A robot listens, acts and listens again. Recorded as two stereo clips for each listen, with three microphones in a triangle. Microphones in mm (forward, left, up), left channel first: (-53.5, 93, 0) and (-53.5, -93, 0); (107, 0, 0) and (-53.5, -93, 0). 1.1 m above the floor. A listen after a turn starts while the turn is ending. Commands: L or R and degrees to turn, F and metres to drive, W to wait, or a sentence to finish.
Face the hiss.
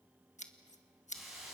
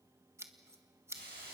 L180
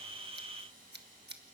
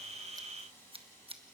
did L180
R45
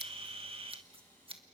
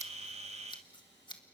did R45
L10
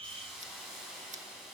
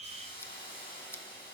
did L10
Facing the hiss.